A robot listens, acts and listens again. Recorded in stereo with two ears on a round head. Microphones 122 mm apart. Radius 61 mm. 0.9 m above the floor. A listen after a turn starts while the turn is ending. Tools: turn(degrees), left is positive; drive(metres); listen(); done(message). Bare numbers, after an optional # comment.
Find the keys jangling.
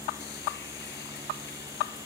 listen()
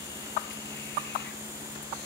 listen()
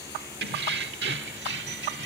turn(-90)
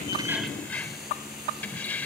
# So it is at 10° left.
turn(10)
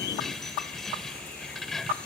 done("Facing the keys jangling.")